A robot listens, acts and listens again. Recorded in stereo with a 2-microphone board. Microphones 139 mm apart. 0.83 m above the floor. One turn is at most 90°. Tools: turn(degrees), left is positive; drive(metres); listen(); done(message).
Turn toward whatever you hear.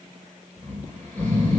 turn(degrees=15)
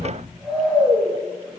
done("Facing the snoring.")